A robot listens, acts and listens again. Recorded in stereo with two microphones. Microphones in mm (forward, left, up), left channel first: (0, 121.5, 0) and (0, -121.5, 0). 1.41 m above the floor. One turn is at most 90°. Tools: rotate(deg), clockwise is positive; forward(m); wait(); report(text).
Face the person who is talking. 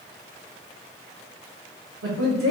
rotate(70)
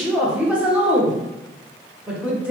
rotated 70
report("Facing the woman speaking, 1 to 2 m away.")